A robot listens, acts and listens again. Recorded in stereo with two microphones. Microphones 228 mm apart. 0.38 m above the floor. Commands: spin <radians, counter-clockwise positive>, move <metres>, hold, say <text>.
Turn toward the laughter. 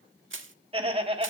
spin -0.44
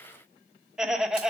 say Found it: laughter, straight ahead, 1 to 2 m away.